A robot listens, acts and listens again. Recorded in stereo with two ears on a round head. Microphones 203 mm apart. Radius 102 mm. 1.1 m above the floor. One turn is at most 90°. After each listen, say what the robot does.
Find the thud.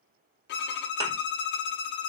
Turn 20° right.
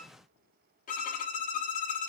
Keep listening.
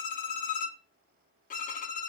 I heard a thud, but can't make it out now. It was about straight ahead or 140° right.